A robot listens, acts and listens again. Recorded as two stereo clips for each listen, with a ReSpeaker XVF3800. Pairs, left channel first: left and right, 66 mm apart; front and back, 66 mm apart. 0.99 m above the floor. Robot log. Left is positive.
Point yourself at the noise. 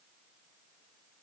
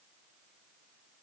cmd idle
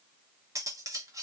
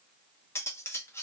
note: The cutlery clinking: 50° right.
cmd yaw -50
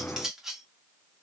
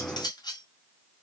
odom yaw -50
end: Found it: cutlery clinking, straight ahead, under 1 m away.